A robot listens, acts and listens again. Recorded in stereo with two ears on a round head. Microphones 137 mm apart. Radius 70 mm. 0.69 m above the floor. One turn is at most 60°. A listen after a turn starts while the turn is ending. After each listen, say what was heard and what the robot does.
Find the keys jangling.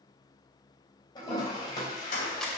The keys jangling: about 65° left or 115° left. Turn 60° left.
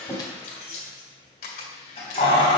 So it is at 35° left. Turn 35° left.
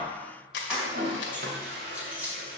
The keys jangling is now 10° right. Turn 10° right.
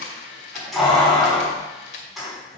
Found it: keys jangling, straight ahead, over 4 m away.